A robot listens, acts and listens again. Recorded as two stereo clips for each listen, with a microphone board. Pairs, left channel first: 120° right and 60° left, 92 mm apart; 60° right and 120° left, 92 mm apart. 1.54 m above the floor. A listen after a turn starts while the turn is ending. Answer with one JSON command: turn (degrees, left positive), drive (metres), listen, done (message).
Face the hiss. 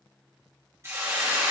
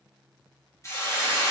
{"done": "Facing the hiss, 2 to 4 m away."}